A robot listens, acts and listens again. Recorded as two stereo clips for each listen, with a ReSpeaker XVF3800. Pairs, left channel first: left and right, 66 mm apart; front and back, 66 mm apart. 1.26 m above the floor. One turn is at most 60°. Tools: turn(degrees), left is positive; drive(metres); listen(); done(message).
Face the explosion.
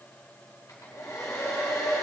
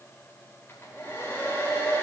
listen()
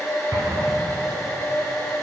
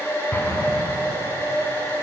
turn(degrees=-55)
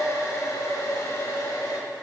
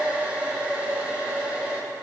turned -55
done("Facing where the explosion came from. I can't hear it now.")